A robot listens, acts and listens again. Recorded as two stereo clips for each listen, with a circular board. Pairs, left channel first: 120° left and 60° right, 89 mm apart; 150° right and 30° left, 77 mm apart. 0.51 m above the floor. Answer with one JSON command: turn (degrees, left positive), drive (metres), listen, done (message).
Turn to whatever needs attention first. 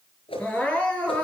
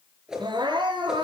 {"turn": 45}
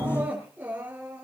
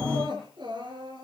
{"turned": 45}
{"turn": 10}
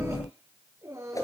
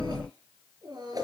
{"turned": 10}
{"done": "Facing the crying, over 4 m away."}